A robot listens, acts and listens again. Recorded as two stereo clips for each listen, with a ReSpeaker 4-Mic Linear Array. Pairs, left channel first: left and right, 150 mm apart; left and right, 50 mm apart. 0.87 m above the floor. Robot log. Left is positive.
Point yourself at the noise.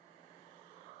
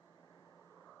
cmd idle
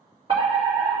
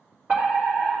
note: The fire alarm: about 35° right or 145° right.
cmd yaw -35
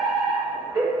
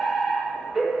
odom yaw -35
note: So it is at 10° right.
cmd yaw -10
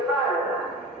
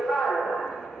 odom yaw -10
end: Found it: a fire alarm, straight ahead.